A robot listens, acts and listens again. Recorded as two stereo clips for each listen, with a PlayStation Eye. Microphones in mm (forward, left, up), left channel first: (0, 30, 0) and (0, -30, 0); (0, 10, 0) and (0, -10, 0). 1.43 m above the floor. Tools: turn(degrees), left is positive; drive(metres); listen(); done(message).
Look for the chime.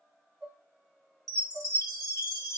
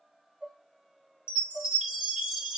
turn(degrees=-75)
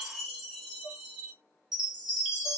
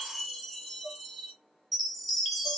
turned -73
done("Found it: a chime, straight ahead.")